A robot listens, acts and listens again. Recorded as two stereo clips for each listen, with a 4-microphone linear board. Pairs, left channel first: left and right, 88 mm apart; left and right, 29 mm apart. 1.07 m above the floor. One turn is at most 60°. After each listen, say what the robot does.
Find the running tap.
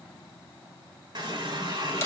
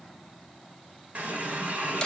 Turn 55° right.
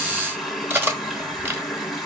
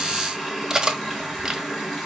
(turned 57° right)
Facing the running tap.